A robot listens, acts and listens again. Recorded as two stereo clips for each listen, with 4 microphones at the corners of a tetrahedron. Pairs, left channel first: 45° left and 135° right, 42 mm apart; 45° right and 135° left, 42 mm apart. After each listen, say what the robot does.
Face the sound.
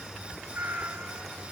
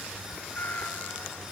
Turn 95° right.
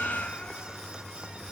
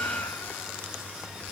Turn 15° right.
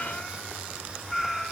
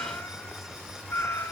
Turn 45° right.
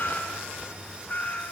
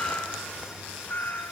Found it: a cat meowing, straight ahead.